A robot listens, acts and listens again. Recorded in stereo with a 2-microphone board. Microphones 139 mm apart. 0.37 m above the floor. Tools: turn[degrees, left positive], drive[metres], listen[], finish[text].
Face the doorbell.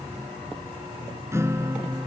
Action: listen[]
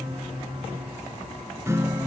Action: listen[]
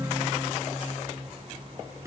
Action: finish[I can't make out a doorbell to turn to.]